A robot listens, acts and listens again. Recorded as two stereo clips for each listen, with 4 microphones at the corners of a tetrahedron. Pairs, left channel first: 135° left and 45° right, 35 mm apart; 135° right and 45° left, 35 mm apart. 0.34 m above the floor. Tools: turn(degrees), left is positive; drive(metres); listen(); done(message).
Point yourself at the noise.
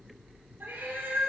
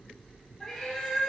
turn(degrees=-50)
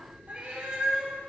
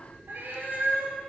turn(degrees=15)
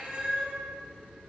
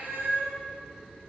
turn(degrees=10)
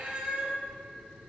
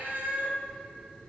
turn(degrees=15)
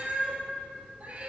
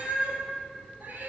turn(degrees=10)
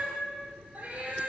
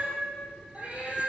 done("Facing the cat meowing.")